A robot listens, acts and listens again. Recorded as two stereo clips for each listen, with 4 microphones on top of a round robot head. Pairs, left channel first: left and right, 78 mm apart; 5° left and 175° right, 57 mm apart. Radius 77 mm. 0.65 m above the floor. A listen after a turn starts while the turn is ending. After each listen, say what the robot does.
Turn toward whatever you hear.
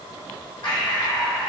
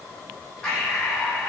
Turn 80° left.
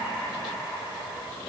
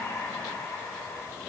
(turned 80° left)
Facing the breathing.